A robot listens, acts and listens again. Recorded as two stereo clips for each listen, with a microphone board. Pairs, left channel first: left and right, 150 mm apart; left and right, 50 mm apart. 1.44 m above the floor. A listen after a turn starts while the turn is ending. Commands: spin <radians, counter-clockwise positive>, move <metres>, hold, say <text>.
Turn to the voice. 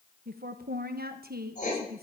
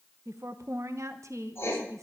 spin -1.57
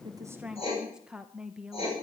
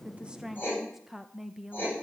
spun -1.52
say Facing the woman speaking.